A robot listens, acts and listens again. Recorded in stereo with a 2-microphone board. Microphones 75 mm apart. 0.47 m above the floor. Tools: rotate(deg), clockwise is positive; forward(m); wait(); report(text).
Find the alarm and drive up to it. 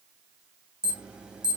rotate(30)
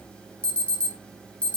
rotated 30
rotate(-15)
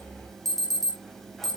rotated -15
forward(1.0)
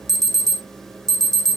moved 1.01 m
forward(1.0)
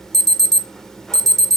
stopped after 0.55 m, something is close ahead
rotate(-10)
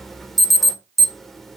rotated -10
report("I am next to the alarm.")